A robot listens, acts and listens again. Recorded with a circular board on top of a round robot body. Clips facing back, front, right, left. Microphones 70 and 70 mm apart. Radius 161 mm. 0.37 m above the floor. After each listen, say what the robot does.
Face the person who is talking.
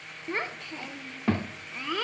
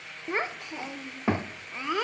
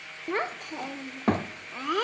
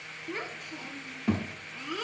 Turn 70° right.
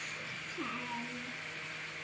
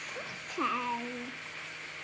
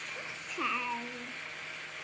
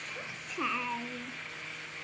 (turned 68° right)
Facing the child speaking.